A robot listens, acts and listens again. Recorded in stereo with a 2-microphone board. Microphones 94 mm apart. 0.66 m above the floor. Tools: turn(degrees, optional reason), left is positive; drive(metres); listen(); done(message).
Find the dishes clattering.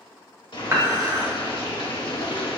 turn(degrees=-35, reason="The dishes clattering: about 35° right or 145° right.")
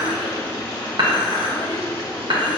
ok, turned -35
turn(degrees=-115, reason="So it is at 115° right.")
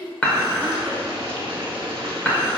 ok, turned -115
turn(degrees=15, reason="The dishes clattering is now 15° left.")
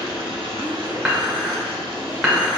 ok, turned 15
done("Facing the dishes clattering.")